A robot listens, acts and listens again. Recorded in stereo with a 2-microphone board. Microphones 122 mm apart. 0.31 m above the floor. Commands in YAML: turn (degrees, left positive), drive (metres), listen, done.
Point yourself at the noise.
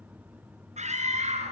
turn: -75
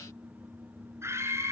turn: -20
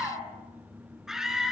done: "Facing the scream."